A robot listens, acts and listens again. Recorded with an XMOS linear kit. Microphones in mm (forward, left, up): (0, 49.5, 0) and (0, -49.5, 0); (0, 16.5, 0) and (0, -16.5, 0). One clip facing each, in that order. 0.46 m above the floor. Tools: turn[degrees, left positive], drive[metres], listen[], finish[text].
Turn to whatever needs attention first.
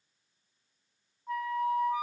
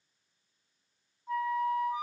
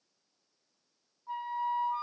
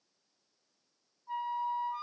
Action: listen[]
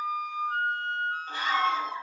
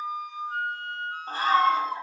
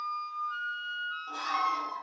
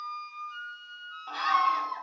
Thought: The scream: about 40° right or 140° right.
Action: turn[-40]
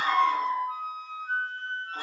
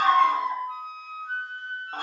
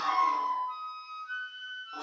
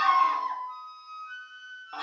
Thought: So it is at 90° right.
Action: turn[-90]
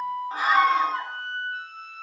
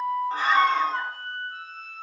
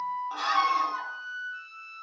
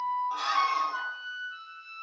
Action: finish[Found it: a scream, straight ahead, 1 to 2 m away.]